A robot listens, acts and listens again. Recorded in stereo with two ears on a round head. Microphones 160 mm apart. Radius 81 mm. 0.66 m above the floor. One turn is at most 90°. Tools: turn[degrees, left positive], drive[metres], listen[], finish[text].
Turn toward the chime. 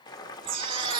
Thought: The chime: about 55° right or 125° right.
Action: turn[-55]
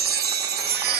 Thought: So it is at 65° right.
Action: turn[-65]
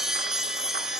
Action: finish[Found it: a chime, straight ahead, under 1 m away.]